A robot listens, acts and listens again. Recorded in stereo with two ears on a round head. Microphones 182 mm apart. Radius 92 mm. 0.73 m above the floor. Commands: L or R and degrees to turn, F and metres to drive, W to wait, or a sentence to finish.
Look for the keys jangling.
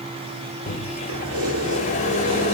R90
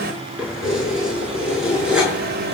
Found it: keys jangling, straight ahead, over 4 m away.